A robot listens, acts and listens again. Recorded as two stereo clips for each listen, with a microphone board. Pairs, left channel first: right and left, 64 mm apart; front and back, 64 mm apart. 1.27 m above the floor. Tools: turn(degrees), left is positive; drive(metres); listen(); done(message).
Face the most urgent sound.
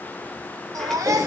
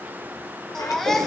turn(degrees=85)
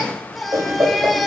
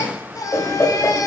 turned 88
done("Found it: a baby crying, straight ahead, 1 to 2 m away.")